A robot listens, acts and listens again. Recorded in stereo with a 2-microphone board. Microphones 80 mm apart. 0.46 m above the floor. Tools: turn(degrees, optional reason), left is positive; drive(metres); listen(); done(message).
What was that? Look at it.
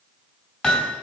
turn(degrees=30)
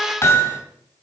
turn(degrees=135, reason="So it is at 135° left.")
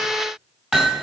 turn(degrees=-10, reason="The hammering is now 10° right.")
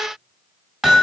done("Found it: hammering, straight ahead.")